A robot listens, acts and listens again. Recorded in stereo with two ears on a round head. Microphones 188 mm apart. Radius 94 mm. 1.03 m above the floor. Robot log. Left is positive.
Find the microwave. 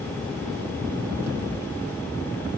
cmd idle
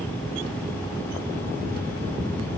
cmd idle
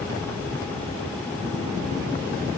end: I can't make out a microwave to turn to.